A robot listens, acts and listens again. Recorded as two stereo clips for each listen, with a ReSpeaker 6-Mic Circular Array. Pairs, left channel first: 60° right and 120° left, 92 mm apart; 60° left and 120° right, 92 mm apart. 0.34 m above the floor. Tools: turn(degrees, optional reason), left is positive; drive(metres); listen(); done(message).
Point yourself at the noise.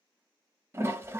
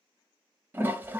turn(degrees=175, reason="The toilet flushing: 175° left.")
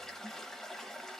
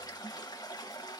turn(degrees=25, reason="The toilet flushing is now 25° left.")
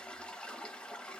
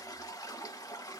turn(degrees=15, reason="The toilet flushing is now 15° left.")
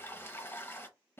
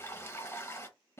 done("Facing the toilet flushing, under 1 m away.")